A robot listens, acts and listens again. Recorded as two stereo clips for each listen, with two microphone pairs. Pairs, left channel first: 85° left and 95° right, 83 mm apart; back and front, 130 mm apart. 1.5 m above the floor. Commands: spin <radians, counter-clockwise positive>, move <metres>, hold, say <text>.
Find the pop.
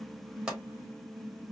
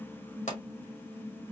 spin -3.05
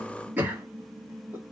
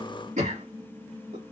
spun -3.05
say I heard a pop from this way, but can't make it out now.